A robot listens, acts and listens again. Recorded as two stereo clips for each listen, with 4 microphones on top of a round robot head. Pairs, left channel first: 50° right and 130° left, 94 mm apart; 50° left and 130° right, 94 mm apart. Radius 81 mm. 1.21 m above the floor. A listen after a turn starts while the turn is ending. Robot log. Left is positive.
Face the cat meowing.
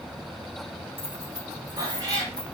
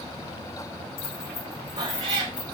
note: The cat meowing: straight behind.
cmd yaw +180
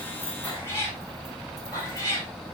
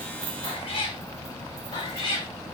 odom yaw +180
note: The cat meowing is now 10° left.
cmd yaw +10
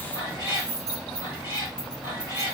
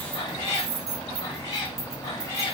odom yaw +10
end: Found it: a cat meowing, straight ahead, over 4 m away.